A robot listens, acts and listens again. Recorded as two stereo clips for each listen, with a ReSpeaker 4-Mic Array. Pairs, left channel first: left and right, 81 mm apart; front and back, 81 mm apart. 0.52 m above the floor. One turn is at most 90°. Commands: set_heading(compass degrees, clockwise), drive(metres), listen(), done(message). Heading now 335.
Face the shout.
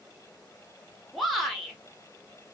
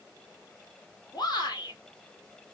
done("Found it: a shout, straight ahead.")